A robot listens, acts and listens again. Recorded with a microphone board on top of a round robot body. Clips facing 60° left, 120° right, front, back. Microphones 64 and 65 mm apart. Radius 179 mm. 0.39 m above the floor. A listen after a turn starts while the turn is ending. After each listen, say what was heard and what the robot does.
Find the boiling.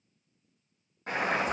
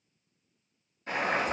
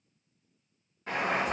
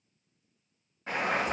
The boiling: 95° left. Turn 95° left.
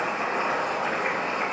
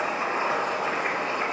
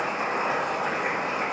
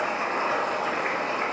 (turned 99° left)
Facing the boiling, 1 to 2 m away.